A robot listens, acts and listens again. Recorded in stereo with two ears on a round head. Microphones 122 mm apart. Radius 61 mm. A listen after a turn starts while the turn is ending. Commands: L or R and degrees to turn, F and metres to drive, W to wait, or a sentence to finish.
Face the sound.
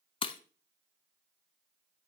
L40
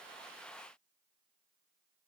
W
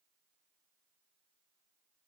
I heard breaking glass, but can't make it out now. It was about straight ahead or 100° left.